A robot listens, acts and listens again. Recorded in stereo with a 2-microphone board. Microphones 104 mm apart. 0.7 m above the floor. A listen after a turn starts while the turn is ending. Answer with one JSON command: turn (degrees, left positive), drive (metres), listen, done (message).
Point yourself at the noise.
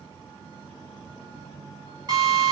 {"turn": -40}
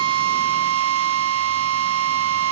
{"turn": -100}
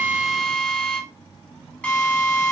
{"turn": 10}
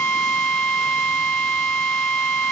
{"done": "Found it: a drill, straight ahead, 2 to 4 m away."}